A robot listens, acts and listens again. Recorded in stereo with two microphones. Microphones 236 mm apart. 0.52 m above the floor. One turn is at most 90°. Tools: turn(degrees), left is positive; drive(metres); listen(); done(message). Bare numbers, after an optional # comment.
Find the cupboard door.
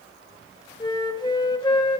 listen()
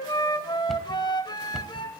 turn(30)
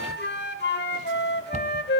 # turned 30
# So it is at 30° right.
turn(-30)
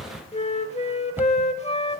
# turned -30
# The cupboard door is now 10° right.
turn(-10)
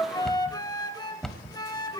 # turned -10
done("Found it: a cupboard door, straight ahead.")